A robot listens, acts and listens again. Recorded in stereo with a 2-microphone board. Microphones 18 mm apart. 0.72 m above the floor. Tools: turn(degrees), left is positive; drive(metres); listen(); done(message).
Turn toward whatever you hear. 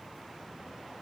listen()
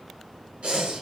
turn(degrees=-90)
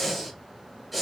done("Found it: breathing, straight ahead.")